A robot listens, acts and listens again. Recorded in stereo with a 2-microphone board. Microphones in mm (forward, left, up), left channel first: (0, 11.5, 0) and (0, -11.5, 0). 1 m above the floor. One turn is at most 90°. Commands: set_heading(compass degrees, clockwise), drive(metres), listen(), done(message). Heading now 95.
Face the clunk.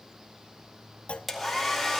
set_heading(25)
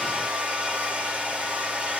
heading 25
listen()
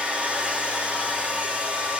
done("I heard a clunk, but can't make it out now. It was about straight ahead or 40° left.")